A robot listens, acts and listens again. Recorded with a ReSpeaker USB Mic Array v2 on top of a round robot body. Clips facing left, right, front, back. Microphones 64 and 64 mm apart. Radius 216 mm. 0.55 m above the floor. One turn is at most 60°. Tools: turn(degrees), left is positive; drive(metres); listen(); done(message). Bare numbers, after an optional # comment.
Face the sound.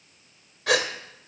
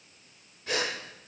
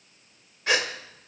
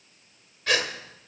# The gasp: 70° left.
turn(60)
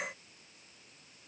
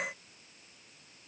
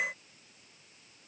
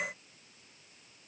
# Nothing new. It was at 10° left.
turn(10)
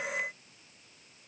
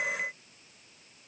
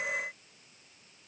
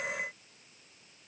done("Facing where the gasp came from. I can't hear it now.")